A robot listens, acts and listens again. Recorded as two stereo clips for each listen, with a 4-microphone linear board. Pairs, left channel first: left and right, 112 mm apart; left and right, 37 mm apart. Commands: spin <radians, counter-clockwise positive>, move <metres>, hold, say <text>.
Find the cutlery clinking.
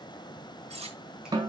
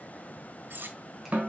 spin -1.31
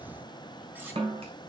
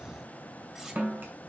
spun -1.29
hold
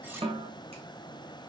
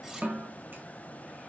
hold
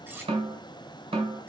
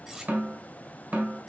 spin -0.35
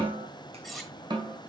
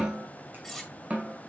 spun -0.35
say Facing the cutlery clinking, 1 to 2 m away.